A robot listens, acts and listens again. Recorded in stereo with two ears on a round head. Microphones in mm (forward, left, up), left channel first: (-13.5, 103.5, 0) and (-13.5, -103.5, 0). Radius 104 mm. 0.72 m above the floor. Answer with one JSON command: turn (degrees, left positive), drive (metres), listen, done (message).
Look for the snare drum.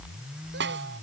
{"turn": -55}
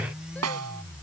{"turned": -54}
{"turn": -75}
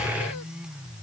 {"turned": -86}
{"turn": 15}
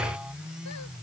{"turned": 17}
{"listen": true}
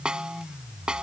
{"done": "Found it: a snare drum, straight ahead."}